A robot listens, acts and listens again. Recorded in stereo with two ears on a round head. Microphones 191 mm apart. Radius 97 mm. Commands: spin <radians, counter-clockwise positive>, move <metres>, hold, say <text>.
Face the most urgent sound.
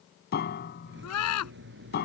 spin 1.57
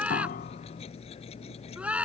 say Found it: a scream, straight ahead.